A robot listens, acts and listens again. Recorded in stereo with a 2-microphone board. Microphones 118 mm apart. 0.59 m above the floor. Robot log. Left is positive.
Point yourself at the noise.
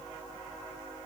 cmd idle
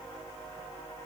cmd idle
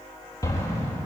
note: The explosion: about 30° left or 150° left.
cmd yaw +30
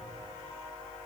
cmd idle
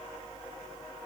end: I heard an explosion, but can't make it out now. It was about straight ahead or 120° left.